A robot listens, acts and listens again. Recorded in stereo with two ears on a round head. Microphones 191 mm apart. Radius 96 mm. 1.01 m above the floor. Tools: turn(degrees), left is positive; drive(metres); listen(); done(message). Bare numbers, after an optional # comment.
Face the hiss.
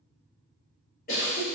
# The hiss: about 65° left or 115° left.
turn(65)
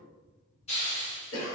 # So it is at 30° left.
turn(30)
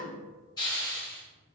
# The hiss is now 20° left.
turn(20)
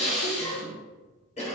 done("Facing the hiss.")